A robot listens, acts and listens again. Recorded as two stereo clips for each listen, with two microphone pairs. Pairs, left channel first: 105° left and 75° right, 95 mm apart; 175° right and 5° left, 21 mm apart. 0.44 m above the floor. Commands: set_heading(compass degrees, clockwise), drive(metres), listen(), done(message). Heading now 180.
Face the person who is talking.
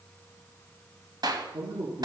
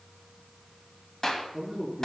set_heading(250)
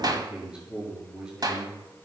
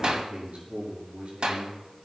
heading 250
done("Found it: a man speaking, straight ahead, over 4 m away.")